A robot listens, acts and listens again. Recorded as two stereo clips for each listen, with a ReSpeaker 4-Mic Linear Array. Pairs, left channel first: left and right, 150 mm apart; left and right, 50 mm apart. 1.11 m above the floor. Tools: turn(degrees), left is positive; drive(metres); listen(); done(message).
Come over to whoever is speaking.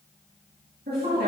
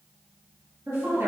turn(degrees=-90)
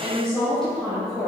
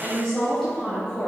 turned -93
drive(metres=1.0)
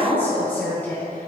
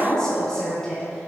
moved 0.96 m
turn(degrees=15)
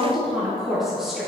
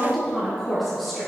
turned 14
drive(metres=1.0)
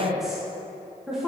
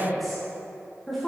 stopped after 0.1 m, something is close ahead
done("Arrived at the woman speaking, straight ahead.")